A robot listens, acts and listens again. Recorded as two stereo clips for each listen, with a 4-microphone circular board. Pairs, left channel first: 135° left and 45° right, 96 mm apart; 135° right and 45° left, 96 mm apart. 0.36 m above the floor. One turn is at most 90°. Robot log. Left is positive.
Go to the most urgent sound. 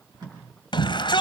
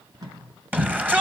note: The shout: 115° left.
cmd yaw +90
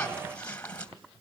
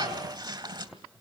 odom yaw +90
note: The shout is now 60° left.
cmd yaw +60
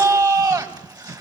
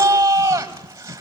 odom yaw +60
note: The shout is now 10° right.
cmd yaw -10
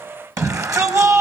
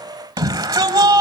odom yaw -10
cmd fwd 1.0
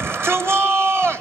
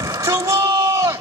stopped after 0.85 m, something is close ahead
end: Arrived at the shout, straight ahead.